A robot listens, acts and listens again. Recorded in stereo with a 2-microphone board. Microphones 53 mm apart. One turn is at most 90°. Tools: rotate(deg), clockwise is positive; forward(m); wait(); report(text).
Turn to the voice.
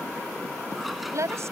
rotate(60)
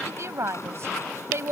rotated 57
rotate(55)
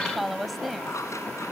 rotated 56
report("Facing the woman speaking.")